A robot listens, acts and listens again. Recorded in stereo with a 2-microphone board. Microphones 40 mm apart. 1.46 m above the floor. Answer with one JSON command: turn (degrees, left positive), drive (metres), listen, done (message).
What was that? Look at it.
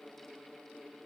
{"listen": true}
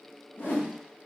{"turn": 60}
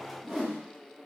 {"done": "Found it: a whoosh, straight ahead, 1 to 2 m away."}